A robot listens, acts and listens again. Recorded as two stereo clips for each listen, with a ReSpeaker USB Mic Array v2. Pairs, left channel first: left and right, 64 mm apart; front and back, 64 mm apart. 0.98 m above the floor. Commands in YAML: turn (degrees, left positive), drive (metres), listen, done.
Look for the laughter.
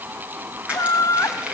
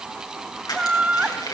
turn: 115
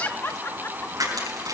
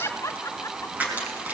turn: 40
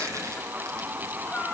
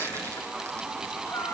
listen: true
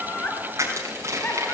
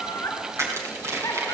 turn: 40
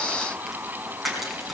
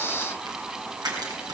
listen: true
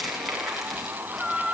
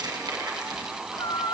done: "Found it: laughter, straight ahead."